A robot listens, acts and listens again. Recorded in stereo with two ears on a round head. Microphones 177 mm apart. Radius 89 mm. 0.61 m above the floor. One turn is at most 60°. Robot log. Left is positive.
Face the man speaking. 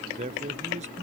note: The man speaking: about 35° right or 145° right.
cmd yaw -35
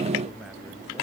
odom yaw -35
cmd idle
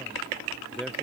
end: Found it: a man speaking, straight ahead.